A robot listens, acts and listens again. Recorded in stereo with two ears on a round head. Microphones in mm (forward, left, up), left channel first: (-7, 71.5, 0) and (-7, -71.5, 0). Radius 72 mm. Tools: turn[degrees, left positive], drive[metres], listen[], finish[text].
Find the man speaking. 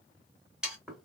Action: listen[]
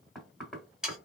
Action: listen[]
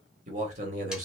Thought: The man speaking: about 50° right or 130° right.
Action: turn[-50]
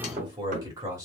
Thought: So it is at 20° right.
Action: turn[-20]
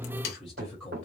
Action: finish[Facing the man speaking.]